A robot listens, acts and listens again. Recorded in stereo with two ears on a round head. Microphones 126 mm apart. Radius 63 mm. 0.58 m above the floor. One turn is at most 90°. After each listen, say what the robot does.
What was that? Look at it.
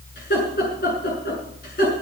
Turn 60° left.
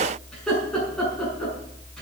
Facing the laughter, over 4 m away.